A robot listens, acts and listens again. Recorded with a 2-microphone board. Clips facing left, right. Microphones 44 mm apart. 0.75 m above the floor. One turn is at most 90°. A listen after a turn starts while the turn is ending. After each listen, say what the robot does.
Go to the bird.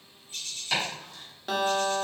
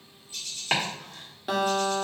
Turn 45° left.
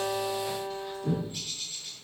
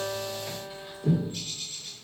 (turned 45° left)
Drive 1.0 m forward.
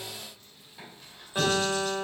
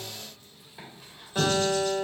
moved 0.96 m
Keep listening.
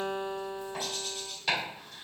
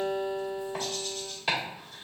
Keep listening.
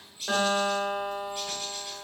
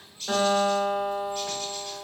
Turn 15° left.
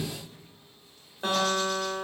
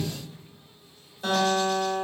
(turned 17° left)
Keep listening.
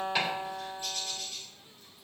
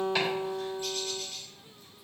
Drive 1.0 m forward.
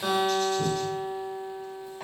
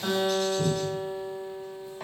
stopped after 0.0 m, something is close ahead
Keep listening.
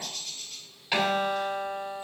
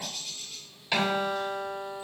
Arrived at the bird, straight ahead.